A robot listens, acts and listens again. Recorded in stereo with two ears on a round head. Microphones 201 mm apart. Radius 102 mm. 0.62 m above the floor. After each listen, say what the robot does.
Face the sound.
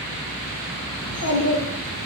Turn 90° left.
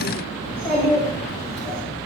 Found it: a child speaking, straight ahead, 2 to 4 m away.